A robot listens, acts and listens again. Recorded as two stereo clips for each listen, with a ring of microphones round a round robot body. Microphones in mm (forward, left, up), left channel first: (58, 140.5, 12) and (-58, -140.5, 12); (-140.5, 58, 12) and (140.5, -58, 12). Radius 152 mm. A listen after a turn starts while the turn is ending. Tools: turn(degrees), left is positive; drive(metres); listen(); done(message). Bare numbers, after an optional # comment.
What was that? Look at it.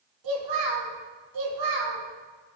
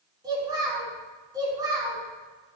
# The child speaking: 100° right.
turn(-100)
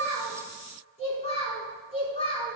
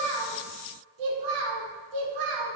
done("Found it: a child speaking, straight ahead, over 4 m away.")